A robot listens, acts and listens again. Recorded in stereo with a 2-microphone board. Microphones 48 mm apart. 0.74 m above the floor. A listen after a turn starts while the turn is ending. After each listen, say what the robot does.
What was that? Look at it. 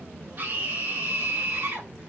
Turn 40° right.
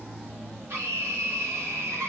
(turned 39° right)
Turn 95° right.
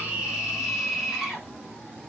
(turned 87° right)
Turn 10° right.
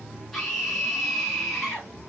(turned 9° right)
Found it: a scream, straight ahead.